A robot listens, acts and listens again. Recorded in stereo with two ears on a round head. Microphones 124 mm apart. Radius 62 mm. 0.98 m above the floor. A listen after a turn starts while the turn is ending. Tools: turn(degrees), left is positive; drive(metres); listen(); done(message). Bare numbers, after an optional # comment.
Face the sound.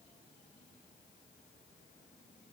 listen()
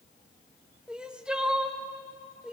turn(-30)
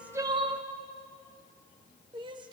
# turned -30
# So it is at 140° right.
turn(-140)
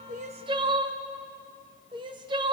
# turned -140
# The crying is now 35° right.
turn(-35)
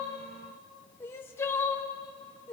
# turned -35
# The crying is now 20° left.
turn(20)
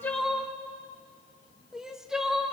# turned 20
done("Facing the crying, under 1 m away.")